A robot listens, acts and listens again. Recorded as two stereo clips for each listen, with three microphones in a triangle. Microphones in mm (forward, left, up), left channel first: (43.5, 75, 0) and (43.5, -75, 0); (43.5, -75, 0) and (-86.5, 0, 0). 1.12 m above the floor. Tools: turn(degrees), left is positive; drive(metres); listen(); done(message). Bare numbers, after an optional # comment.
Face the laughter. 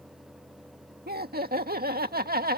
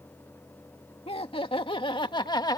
# The laughter: 95° right.
turn(-95)
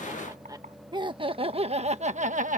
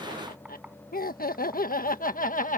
# The laughter is now 55° right.
turn(-55)
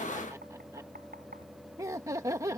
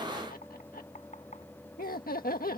# The laughter is now 20° right.
turn(-20)
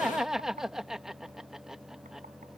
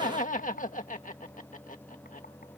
done("Found it: laughter, straight ahead.")